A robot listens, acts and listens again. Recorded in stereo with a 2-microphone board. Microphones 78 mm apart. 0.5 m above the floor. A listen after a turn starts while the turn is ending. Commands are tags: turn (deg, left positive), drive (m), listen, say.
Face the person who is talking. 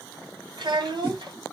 <turn deg="-65"/>
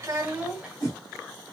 <turn deg="-10"/>
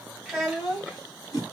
<say>Facing the child speaking.</say>